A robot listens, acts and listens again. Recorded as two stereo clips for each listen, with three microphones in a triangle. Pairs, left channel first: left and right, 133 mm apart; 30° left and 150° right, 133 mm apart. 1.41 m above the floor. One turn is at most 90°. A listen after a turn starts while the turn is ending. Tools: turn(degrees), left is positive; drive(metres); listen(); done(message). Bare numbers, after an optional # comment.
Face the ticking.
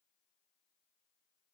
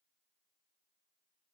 listen()
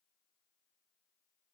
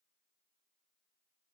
listen()
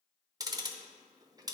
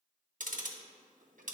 # The ticking: 155° right.
turn(-90)
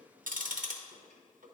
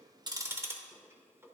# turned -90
# The ticking is now 75° right.
turn(-75)
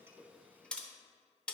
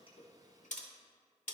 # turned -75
# The ticking is now 10° left.
turn(10)
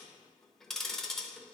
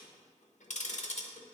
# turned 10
done("Found it: ticking, straight ahead, under 1 m away.")